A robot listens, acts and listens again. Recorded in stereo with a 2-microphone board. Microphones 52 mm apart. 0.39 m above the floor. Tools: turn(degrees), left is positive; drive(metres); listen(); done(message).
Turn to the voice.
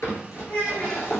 turn(degrees=25)
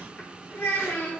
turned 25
turn(degrees=130)
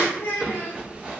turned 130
turn(degrees=55)
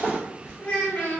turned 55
turn(degrees=30)
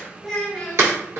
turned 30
done("Found it: a child speaking, straight ahead.")